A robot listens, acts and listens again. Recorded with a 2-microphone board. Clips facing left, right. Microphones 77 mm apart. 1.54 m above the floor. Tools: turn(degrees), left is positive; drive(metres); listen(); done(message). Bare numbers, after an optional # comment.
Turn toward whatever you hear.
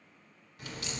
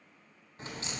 # The crack: about 30° right or 150° right.
turn(-30)
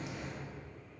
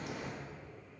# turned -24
# So it is at 125° right.
turn(-125)
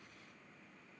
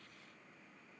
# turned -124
done("I heard a crack from this way, but can't make it out now.")